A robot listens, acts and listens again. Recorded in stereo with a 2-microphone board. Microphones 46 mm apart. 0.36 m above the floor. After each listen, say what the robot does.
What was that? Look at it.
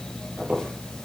Turn 35° right.
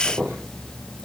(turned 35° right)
Turn 110° right.
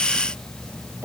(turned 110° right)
Turn 50° right.
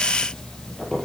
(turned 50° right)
Turn 10° left.
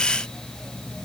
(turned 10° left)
Keep listening.
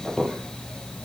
Found it: a squeak, straight ahead.